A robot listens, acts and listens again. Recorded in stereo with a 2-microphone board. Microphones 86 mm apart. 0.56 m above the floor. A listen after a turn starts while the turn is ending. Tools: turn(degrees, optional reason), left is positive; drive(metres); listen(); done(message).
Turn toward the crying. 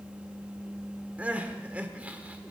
turn(degrees=-15, reason="The crying: about 15° right or 165° right.")
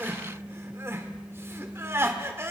turn(degrees=-150, reason="So it is at 150° right.")
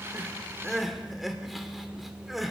done("Facing the crying, 1 to 2 m away.")